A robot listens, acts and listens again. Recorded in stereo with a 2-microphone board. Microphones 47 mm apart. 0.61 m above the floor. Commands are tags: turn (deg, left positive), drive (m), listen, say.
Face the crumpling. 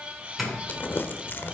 <turn deg="45"/>
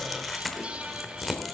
<say>Facing the crumpling, 1 to 2 m away.</say>